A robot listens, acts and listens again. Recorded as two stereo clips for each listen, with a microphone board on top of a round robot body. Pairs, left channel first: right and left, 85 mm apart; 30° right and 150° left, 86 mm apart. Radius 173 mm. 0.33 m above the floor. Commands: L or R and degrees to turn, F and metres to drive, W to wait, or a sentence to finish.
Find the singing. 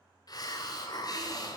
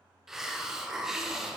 W
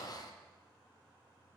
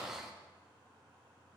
W
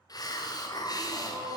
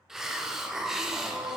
L80
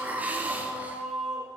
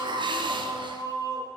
Found it: singing, straight ahead, 2 to 4 m away.